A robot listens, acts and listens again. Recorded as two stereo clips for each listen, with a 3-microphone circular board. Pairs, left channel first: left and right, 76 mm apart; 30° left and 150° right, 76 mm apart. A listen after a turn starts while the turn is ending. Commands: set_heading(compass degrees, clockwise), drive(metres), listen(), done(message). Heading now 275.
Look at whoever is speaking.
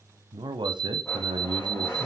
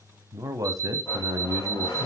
set_heading(20)
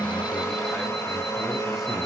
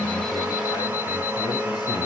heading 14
listen()
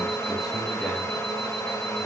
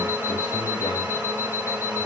listen()
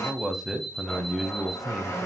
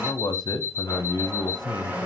done("Facing the man speaking.")